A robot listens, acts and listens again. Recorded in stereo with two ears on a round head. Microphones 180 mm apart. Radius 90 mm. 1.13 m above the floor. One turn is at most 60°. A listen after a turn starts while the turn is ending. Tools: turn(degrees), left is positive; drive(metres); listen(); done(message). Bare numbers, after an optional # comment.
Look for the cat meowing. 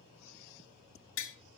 listen()
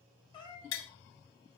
# The cat meowing: about 25° left or 155° left.
turn(25)
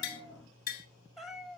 done("Found it: a cat meowing, straight ahead, 2 to 4 m away.")